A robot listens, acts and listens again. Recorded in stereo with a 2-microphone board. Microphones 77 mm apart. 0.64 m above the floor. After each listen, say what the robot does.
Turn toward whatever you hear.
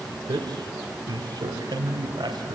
Turn 90° right.
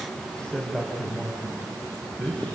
Turn 10° left.
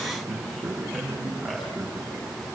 Found it: a man speaking, straight ahead.